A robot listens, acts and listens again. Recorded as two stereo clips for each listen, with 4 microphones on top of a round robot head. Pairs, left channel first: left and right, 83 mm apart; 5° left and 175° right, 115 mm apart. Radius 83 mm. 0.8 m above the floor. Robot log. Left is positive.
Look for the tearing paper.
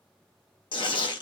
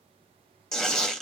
note: The tearing paper: 85° left.
cmd yaw +85
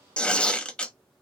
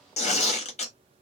note: The tearing paper is now 15° left.
cmd yaw +15
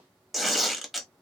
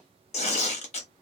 end: Found it: tearing paper, straight ahead, 1 to 2 m away.